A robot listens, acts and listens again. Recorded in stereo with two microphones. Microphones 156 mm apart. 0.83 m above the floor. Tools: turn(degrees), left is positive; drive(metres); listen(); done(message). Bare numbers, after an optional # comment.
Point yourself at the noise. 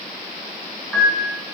turn(30)
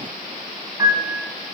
# So it is at 20° right.
turn(-20)
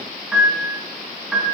done("Facing the piano, 2 to 4 m away.")